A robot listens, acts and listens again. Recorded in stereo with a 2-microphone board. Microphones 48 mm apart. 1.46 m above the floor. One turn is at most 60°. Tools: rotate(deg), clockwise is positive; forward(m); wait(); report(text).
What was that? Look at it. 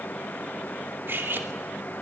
rotate(50)
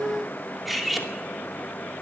report("Facing the cutlery clinking.")